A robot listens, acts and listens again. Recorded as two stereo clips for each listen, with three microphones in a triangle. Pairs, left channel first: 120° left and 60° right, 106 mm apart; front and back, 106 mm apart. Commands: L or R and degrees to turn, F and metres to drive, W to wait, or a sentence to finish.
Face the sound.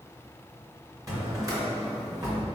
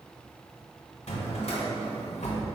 Facing the drawer, 1 to 2 m away.